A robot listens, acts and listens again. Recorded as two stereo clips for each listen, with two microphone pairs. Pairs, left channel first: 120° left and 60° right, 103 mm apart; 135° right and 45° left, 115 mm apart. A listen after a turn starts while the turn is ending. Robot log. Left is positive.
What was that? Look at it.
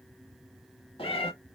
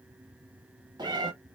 note: The cat meowing: 95° left.
cmd yaw +95
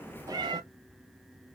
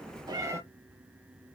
note: The cat meowing is now 20° right.
cmd yaw -20
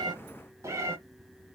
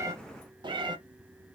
end: Facing the cat meowing, under 1 m away.